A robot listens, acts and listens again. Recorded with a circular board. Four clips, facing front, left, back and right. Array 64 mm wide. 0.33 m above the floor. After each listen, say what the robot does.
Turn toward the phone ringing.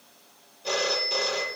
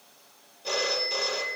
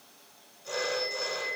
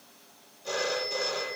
Turn 30° left.
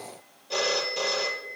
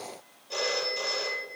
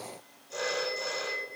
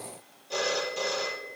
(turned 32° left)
Facing the phone ringing, over 4 m away.